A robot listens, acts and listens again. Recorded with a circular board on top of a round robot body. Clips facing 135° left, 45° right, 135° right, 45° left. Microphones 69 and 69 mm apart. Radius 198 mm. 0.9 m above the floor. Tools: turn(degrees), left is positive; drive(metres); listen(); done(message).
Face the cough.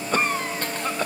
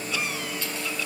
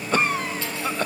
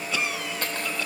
turn(degrees=180)
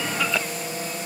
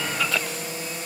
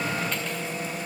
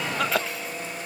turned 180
turn(degrees=50)
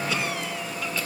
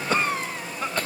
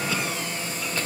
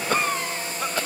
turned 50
done("Found it: a cough, straight ahead, 1 to 2 m away.")